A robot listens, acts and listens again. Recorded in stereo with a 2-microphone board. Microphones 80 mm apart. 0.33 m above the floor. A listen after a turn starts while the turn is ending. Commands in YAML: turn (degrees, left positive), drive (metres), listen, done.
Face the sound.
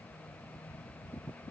listen: true
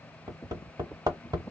turn: -60
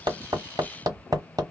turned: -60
turn: -55
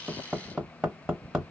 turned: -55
turn: -10
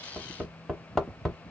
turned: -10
done: "Found it: hammering, straight ahead, 1 to 2 m away."